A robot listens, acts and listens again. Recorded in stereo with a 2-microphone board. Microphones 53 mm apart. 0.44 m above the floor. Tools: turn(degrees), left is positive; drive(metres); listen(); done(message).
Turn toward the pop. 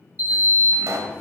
turn(degrees=-70)
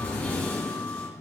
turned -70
listen()
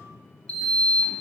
done("I heard a pop, but can't make it out now. It was about straight ahead or 40° right.")